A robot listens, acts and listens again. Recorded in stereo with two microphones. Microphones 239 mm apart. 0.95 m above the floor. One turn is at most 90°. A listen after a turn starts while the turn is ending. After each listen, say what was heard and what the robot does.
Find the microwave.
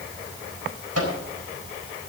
Turn 90° right.
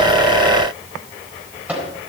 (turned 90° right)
Found it: a microwave, straight ahead, over 4 m away.